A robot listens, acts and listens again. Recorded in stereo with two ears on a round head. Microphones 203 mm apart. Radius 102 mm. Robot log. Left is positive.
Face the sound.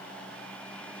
cmd idle
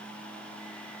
cmd idle
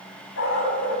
note: The dog barking: about 60° left or 120° left.
cmd yaw +60
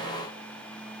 cmd idle
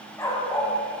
note: So it is at 15° left.
cmd yaw +15
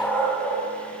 note: The dog barking is now 10° left.
cmd yaw +10
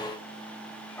note: The dog barking is now 10° left.
cmd yaw +10
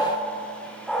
end: Found it: a dog barking, straight ahead, over 4 m away.